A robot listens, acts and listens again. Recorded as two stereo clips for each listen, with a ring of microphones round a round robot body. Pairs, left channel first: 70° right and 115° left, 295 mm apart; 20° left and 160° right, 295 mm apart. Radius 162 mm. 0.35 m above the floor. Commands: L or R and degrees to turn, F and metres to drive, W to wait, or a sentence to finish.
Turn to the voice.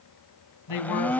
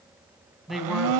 R65
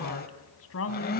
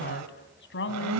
R25
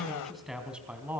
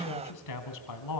L30
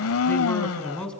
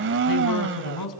L20
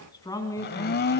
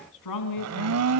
L10
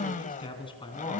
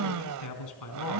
Facing the man speaking.